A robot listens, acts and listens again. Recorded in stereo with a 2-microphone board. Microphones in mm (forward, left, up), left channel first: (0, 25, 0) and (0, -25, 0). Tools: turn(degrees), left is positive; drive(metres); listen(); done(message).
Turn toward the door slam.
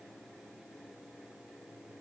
listen()
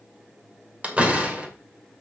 turn(degrees=-25)
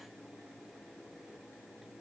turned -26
listen()
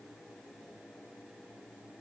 done("I heard a door slam, but can't make it out now. It was about straight ahead or 125° right.")